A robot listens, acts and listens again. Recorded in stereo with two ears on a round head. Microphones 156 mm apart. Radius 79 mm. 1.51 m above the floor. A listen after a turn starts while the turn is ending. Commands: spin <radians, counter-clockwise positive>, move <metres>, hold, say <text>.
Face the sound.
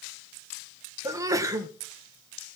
spin -0.35
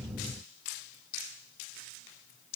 hold
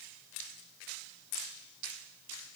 say I heard a sneeze, but can't make it out now. It was about straight ahead or 140° right.